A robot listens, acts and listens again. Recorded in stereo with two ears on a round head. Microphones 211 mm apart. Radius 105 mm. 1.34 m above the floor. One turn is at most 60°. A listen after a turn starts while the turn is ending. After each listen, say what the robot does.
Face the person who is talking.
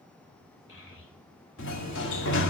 Turn 55° left.
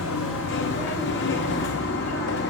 Keep listening.
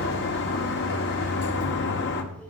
Keep listening.
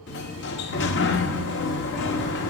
I heard a child speaking, but can't make it out now. It was about straight ahead or 70° left.